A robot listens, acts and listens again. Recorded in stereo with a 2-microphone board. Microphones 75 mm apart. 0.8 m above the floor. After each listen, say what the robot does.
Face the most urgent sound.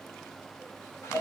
Keep listening.
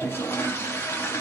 Keep listening.
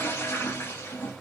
I can't make out anything urgent, only a toilet flushing.